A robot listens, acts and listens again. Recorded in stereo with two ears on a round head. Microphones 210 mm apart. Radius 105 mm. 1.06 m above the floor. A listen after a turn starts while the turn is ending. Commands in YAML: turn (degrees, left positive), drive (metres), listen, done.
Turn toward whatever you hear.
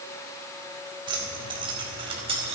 turn: -25
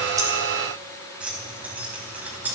turn: -10
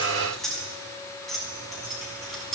done: "Found it: keys jangling, straight ahead."